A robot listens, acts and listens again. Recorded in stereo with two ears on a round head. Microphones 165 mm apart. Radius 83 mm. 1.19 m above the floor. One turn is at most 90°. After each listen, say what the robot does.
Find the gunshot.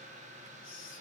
Keep listening.
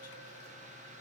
Keep listening.
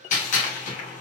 Turn 40° left.
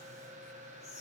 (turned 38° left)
Keep listening.
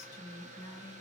I heard a gunshot, but can't make it out now. It was about 5° left or 100° left.